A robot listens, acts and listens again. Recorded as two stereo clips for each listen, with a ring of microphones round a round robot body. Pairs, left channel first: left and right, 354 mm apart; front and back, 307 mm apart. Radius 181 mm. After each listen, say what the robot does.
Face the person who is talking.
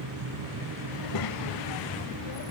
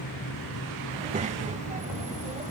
Turn 115° left.
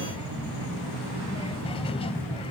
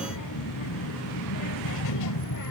Turn 15° left.
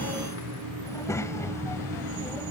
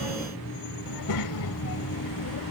Turn 10° left.
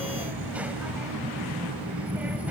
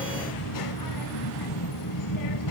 Found it: a child speaking, straight ahead.